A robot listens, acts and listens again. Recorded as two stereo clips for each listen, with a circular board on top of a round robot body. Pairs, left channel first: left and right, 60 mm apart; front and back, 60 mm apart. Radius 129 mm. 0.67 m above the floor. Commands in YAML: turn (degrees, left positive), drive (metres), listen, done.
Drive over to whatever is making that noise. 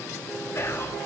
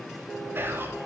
turn: 130
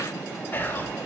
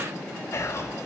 turn: 35
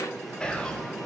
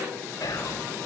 turn: 15
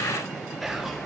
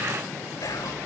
drive: 1.0
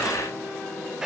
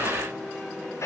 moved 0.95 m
turn: -15
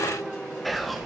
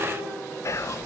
drive: 1.0
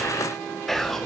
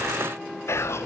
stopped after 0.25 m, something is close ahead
done: "I am next to the whispering."